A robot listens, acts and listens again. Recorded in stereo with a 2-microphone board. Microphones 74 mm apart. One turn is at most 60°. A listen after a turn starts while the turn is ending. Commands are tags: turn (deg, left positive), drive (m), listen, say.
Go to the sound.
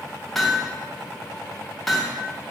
<turn deg="30"/>
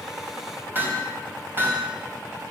<turn deg="-30"/>
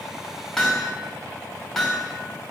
<turn deg="10"/>
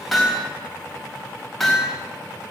<drive m="1.0"/>
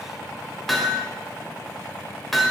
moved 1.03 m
<drive m="1.0"/>
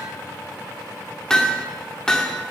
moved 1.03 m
<turn deg="10"/>
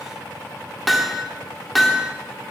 <drive m="1.0"/>
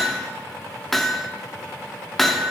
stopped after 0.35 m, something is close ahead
<say>I am next to the hammering.</say>